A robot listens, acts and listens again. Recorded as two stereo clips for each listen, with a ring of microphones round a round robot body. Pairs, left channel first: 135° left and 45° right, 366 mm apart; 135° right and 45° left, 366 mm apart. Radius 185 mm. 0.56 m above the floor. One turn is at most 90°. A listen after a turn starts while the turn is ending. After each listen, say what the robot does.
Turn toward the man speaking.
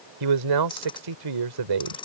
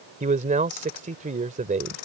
Turn 25° right.
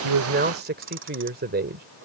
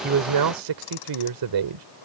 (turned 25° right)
Turn 20° left.
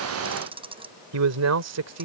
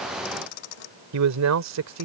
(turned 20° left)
Facing the man speaking.